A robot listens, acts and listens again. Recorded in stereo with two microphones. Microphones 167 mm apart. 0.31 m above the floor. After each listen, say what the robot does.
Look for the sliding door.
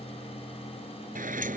Turn 55° right.
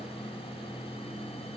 Keep listening.
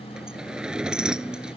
Found it: a sliding door, straight ahead.